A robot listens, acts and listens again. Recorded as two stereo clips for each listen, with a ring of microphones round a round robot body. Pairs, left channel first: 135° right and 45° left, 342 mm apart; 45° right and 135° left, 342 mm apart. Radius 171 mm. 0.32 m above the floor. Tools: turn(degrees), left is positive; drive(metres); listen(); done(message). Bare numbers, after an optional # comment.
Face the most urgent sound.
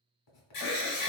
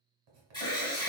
# The alarm: 120° right.
turn(-120)
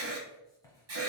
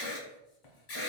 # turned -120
done("Facing the alarm.")